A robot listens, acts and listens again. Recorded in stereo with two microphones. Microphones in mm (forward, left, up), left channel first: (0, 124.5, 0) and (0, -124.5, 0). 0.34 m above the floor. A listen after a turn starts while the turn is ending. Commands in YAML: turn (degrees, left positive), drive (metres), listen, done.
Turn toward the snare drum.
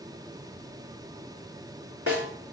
turn: 65
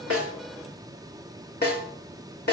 turn: 45
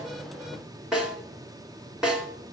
done: "Found it: a snare drum, straight ahead."